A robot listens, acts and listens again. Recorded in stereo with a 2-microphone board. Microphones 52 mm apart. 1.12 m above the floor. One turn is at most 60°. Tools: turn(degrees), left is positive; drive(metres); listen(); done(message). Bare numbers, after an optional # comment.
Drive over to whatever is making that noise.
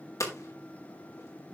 turn(60)
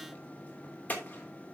# So it is at 30° left.
turn(30)
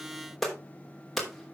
drive(1.0)
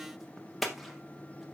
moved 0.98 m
drive(1.0)
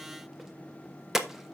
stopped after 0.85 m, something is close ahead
# The hammering is now 10° right.
turn(-10)
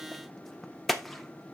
done("Arrived at the hammering, straight ahead.")